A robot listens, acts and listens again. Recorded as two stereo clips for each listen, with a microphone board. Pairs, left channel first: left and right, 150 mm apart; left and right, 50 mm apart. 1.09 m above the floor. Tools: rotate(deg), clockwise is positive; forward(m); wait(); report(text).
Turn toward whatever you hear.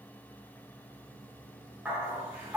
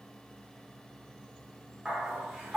rotate(30)
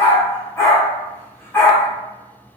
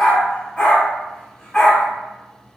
rotate(-20)
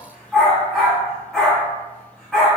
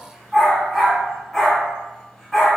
report("Facing the dog barking.")